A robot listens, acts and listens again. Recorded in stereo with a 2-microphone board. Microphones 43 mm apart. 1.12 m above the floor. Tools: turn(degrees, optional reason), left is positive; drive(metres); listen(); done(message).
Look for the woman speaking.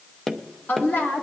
turn(degrees=55, reason="The woman speaking: about 55° left or 125° left.")
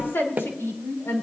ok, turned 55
turn(degrees=65, reason="So it is at 65° left.")
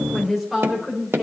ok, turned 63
done("Found it: a woman speaking, straight ahead, over 4 m away.")